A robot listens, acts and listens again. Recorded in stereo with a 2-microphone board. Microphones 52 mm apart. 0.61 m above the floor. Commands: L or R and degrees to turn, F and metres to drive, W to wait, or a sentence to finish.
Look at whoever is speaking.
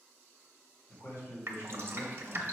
L60
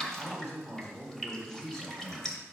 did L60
L45
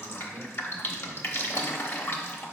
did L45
Found it: a man speaking, straight ahead, 2 to 4 m away.